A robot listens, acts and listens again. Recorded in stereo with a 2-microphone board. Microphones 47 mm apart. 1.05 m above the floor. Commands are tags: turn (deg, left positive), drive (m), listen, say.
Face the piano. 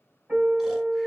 <turn deg="-30"/>
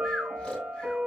<turn deg="-120"/>
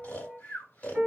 <turn deg="-10"/>
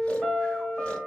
<say>Facing the piano, 2 to 4 m away.</say>